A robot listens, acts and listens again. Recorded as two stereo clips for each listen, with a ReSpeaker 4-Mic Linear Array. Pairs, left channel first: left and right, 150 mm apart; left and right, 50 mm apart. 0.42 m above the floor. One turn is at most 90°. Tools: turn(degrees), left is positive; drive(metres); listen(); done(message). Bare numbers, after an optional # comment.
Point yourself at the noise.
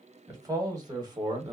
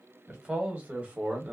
# The man speaking: about 30° right or 150° right.
turn(-30)
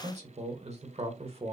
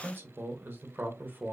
# The man speaking: about 40° right or 140° right.
turn(-40)
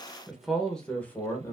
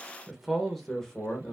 # So it is at 15° left.
turn(15)
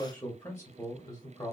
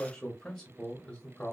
# The man speaking is now 25° left.
turn(25)
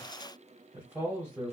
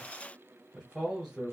# The man speaking is now 10° right.
turn(-10)
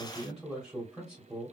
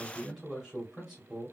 done("Found it: a man speaking, straight ahead.")